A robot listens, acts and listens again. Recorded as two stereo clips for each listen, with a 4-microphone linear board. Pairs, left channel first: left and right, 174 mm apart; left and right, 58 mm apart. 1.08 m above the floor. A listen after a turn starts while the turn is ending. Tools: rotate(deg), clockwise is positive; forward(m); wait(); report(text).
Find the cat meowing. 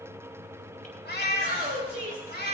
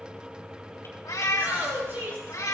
rotate(-70)
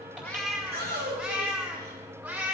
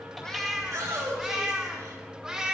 rotate(15)
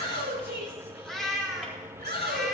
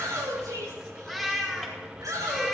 report("Found it: a cat meowing, straight ahead.")